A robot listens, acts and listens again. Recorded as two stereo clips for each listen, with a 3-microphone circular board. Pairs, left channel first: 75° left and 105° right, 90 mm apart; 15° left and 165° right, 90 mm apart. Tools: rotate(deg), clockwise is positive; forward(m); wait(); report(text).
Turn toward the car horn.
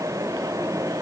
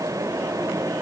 wait()
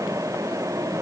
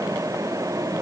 wait()
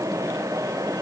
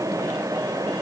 report("I can't make out a car horn.")